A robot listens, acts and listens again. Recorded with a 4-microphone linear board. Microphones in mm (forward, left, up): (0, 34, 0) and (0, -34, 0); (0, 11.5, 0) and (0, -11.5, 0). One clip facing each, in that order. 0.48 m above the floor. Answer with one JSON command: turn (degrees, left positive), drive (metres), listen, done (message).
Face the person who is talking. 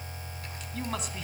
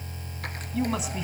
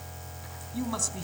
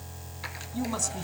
{"turn": -30}
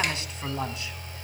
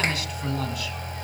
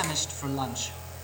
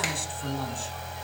{"turn": 30}
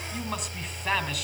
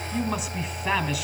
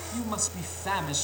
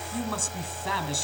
{"done": "Found it: a man speaking, straight ahead."}